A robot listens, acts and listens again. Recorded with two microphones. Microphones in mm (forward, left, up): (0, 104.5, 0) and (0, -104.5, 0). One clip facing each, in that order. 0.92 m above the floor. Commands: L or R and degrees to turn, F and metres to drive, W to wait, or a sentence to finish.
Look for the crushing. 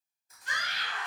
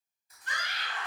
L45
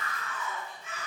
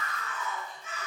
W
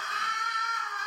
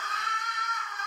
W
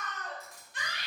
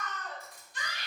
L90
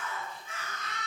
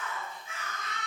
W
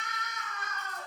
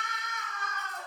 W
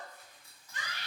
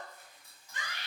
R15
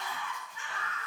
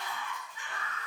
W
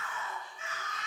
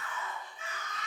W
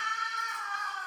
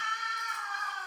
Facing where the crushing came from. I can't hear it now.